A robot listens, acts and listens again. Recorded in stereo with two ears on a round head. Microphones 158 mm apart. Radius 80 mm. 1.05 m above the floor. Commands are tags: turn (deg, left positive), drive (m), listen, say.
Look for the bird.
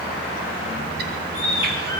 <turn deg="-65"/>
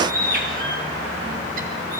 <turn deg="-50"/>
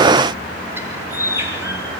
<turn deg="-15"/>
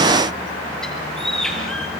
<say>Facing the bird, over 4 m away.</say>